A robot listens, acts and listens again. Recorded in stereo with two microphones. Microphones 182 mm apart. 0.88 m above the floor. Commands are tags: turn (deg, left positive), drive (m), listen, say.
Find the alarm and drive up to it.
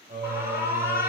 <turn deg="-30"/>
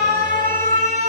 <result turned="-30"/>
<turn deg="-135"/>
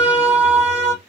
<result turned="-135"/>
<turn deg="-15"/>
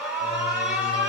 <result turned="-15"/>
<drive m="1.0"/>
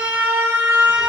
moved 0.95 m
<turn deg="-10"/>
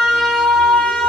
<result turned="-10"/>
<drive m="1.0"/>
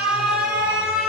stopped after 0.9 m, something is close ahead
<say>I am next to the alarm.</say>